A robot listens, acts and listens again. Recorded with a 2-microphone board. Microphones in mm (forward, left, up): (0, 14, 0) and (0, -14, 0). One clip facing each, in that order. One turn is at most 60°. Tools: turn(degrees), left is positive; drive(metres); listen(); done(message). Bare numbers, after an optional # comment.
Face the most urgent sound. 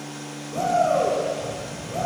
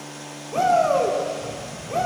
# The shout: about 55° right or 125° right.
turn(-55)
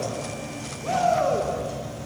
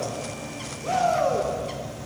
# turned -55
done("Found it: a shout, straight ahead, 1 to 2 m away.")